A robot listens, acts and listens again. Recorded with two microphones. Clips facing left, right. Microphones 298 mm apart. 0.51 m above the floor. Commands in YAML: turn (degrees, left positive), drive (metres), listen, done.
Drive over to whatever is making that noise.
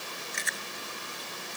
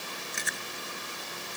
turn: -55
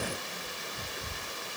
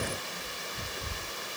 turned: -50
drive: 1.0
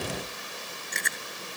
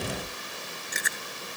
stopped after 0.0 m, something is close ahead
done: "Blocked. The chewing is further on, straight ahead."